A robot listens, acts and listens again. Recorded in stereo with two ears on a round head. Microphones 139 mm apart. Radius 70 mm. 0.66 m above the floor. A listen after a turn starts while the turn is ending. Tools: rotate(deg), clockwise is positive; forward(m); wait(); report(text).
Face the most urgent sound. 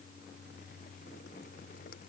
wait()
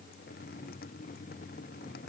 wait()
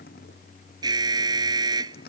rotate(25)
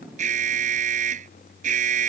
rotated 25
rotate(125)
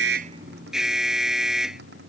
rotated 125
report("Facing the alarm.")